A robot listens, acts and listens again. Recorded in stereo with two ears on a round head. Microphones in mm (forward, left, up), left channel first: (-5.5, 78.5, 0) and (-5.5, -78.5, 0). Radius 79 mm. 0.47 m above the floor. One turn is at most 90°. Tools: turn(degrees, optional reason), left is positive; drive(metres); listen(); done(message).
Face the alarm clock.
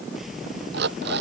turn(degrees=-70, reason="The alarm clock: about 70° right or 110° right.")
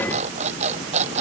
turn(degrees=-40, reason="So it is at 40° right.")
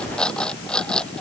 done("Facing the alarm clock.")